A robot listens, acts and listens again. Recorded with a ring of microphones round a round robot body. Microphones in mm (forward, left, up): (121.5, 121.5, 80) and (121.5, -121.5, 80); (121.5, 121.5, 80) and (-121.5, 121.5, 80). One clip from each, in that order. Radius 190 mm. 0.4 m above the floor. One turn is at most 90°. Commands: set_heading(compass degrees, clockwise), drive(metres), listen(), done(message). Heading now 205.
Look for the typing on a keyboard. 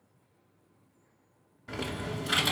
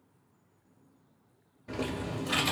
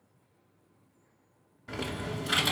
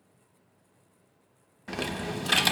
set_heading(115)
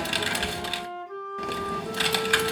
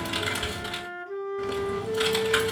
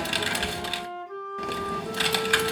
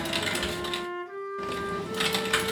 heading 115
set_heading(55)
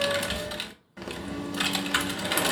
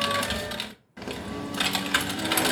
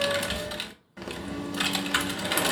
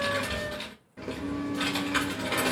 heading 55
done("Facing the typing on a keyboard.")